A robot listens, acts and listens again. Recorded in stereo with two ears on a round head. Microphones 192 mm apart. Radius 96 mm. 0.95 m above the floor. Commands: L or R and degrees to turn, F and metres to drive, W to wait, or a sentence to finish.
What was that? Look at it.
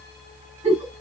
R30
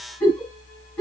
Found it: a giggle, straight ahead.